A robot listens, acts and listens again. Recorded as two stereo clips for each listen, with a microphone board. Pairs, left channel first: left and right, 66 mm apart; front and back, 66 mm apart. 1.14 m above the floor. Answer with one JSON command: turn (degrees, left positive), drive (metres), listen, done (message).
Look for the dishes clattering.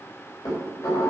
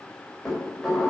{"turn": 85}
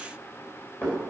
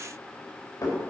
{"turn": 30}
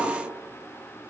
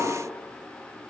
{"done": "Facing the dishes clattering, 2 to 4 m away."}